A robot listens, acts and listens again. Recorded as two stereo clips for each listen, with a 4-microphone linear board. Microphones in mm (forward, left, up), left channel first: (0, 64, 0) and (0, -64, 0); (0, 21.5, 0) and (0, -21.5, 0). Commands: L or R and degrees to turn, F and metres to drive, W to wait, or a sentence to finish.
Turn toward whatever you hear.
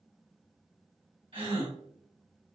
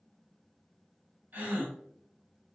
R45
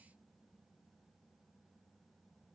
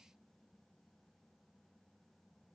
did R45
W
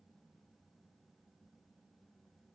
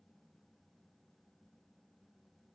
I heard a gasp, but can't make it out now. It was about straight ahead or 90° right.